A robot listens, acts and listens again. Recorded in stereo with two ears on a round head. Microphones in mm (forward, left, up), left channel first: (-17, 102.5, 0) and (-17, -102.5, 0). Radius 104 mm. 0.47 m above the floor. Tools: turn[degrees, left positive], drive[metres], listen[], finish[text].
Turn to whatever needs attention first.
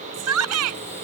Thought: The shout: about 70° right or 110° right.
Action: turn[-70]
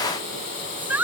Action: finish[Found it: a shout, straight ahead.]